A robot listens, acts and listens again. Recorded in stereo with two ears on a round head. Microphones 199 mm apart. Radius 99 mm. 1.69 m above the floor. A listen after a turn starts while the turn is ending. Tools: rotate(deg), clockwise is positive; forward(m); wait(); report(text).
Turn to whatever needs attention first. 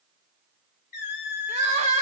rotate(30)
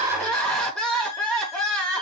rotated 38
report("Found it: crying, straight ahead.")